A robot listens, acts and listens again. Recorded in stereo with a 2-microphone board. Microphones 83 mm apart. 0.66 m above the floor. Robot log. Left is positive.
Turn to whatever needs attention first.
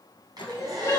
note: The crying: about 40° left or 140° left.
cmd yaw +40
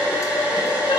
cmd idle
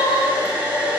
note: So it is at 100° left.
cmd yaw +100
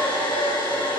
cmd idle
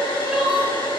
note: The crying is now 15° right.
cmd yaw -15
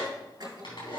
cmd idle
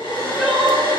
end: Facing the crying, 1 to 2 m away.